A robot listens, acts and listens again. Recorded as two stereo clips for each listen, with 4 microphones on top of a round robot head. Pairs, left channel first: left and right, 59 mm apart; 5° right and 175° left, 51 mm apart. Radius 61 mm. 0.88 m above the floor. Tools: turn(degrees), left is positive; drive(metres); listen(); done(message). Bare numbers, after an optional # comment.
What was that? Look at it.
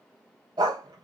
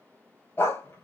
# The dog barking: 65° right.
turn(-65)
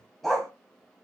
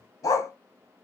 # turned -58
done("Found it: a dog barking, straight ahead.")